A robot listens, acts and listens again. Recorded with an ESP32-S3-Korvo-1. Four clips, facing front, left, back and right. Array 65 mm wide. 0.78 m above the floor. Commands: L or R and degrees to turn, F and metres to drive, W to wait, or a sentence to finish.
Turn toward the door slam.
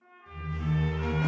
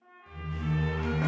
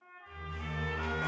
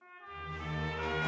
L100
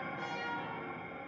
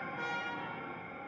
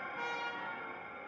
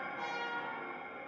I heard a door slam from this way, but can't make it out now.